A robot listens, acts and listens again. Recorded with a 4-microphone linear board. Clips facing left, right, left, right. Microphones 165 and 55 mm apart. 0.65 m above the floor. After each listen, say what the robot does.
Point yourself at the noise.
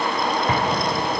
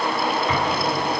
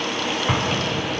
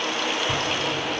Turn 50° left.
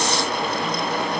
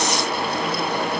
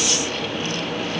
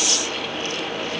Keep listening.
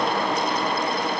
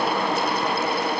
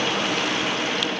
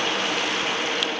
I heard an explosion, but can't make it out now. It was about straight ahead or 80° left.